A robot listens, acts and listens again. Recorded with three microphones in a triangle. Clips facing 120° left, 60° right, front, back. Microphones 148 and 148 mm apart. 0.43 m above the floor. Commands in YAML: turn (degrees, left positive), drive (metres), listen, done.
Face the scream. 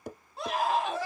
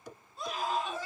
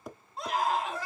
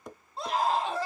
turn: 120
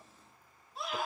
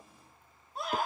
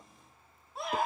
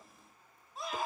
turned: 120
turn: -20
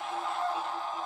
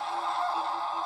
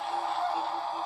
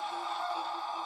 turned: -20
done: "Facing the scream."